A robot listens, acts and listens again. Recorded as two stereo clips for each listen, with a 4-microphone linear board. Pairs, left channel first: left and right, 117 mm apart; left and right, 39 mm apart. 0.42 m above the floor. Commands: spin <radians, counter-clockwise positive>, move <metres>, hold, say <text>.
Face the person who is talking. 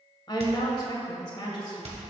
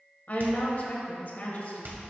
spin 0.70
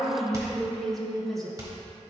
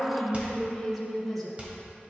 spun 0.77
say Facing the woman speaking, 1 to 2 m away.